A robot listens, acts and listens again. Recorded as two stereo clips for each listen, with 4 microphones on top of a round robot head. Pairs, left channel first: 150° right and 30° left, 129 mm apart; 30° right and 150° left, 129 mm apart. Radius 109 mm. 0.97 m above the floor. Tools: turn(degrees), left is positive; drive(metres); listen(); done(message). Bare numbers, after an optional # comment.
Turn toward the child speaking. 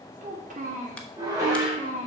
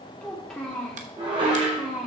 # The child speaking: 65° left.
turn(65)
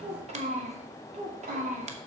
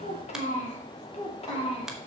# The child speaking is now 10° left.
turn(10)
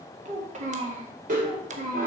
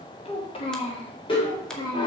# The child speaking is now 20° left.
turn(20)
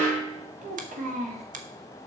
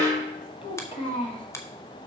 # The child speaking is now 15° left.
turn(15)
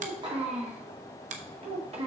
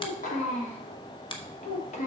# The child speaking is now 10° right.
turn(-10)
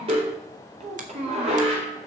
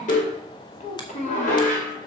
done("Found it: a child speaking, straight ahead.")